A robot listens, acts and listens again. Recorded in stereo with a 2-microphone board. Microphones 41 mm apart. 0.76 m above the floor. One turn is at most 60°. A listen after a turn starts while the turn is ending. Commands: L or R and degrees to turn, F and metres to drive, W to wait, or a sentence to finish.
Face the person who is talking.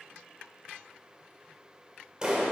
W
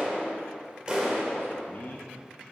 L45
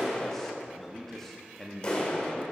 L10
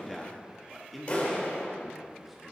Facing the man speaking.